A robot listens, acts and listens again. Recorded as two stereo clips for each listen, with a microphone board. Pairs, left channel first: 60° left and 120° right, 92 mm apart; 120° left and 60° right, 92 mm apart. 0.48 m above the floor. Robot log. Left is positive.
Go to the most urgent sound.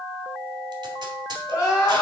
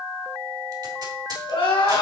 note: The crying: 120° left.
cmd yaw +120
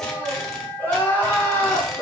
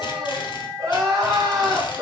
note: The crying is now 10° right.
cmd yaw -10
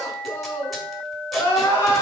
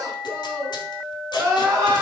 cmd fwd 1.0
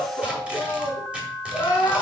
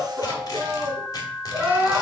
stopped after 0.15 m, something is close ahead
note: The crying is now 10° left.
cmd yaw +10
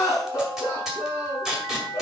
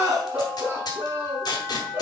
end: Blocked. The crying is further on, straight ahead.